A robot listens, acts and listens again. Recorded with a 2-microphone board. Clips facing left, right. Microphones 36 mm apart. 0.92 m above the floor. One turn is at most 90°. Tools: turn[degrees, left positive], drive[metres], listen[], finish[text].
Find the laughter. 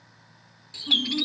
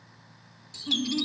Action: turn[30]
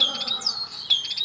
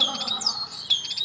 Action: listen[]
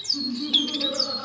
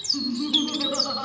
Thought: So it is at 35° right.
Action: turn[-35]
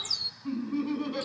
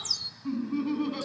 Action: finish[Facing the laughter.]